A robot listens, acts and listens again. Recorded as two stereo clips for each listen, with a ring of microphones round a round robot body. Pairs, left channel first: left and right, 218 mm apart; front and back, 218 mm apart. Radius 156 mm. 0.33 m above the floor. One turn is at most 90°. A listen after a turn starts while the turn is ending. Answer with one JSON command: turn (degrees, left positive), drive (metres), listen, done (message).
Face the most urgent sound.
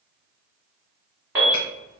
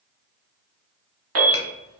{"turn": -90}
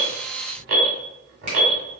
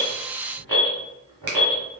{"turn": -80}
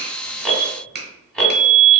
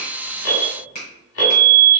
{"done": "Facing the alarm."}